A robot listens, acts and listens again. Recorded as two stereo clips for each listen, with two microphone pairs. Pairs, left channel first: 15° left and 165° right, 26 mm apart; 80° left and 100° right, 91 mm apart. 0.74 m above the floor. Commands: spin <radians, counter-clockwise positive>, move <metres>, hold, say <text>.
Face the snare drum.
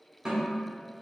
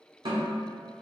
spin -1.92
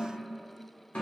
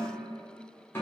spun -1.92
spin 0.26
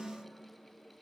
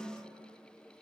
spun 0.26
say Facing the snare drum.